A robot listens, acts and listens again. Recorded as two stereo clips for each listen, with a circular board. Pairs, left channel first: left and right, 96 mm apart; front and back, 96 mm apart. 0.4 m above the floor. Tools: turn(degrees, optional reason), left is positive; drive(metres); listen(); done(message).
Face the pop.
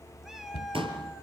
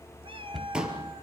turn(degrees=-100, reason="The pop: 100° right.")
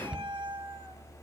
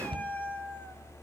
done("Facing where the pop came from. I can't hear it now.")